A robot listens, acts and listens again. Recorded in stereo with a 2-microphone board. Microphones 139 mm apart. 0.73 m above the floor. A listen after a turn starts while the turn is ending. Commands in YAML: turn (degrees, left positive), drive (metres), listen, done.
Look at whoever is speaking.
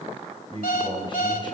turn: 35
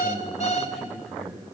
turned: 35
done: "Found it: a man speaking, straight ahead."